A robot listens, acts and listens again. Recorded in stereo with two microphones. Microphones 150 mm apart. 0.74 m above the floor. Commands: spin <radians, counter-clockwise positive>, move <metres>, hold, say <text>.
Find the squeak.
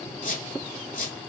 spin 1.13
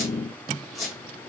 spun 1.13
say Found it: a squeak, straight ahead.